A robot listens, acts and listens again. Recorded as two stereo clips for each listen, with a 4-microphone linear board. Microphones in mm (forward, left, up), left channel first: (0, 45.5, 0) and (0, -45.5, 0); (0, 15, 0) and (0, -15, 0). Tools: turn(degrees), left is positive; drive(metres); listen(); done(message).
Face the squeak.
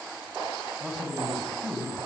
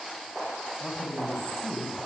listen()
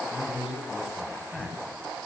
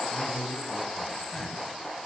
listen()
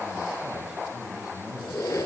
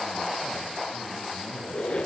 turn(degrees=35)
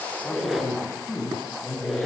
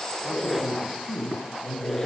done("Facing the squeak, 2 to 4 m away.")